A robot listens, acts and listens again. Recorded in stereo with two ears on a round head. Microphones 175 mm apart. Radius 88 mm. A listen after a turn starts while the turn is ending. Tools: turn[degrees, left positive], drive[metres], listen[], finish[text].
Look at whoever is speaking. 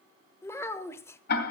Action: turn[30]
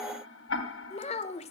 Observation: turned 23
Thought: So it is at 145° left.
Action: turn[145]
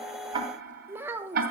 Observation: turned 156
Thought: The child speaking is now 10° right.
Action: turn[-10]
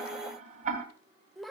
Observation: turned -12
Action: finish[Facing the child speaking, 1 to 2 m away.]